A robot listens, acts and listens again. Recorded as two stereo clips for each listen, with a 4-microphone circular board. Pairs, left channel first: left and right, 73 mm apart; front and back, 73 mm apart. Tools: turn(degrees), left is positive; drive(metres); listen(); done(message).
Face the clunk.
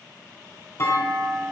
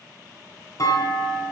turn(degrees=40)
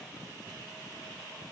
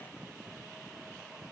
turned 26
turn(degrees=15)
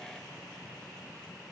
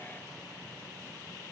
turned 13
done("I heard a clunk from this way, but can't make it out now.")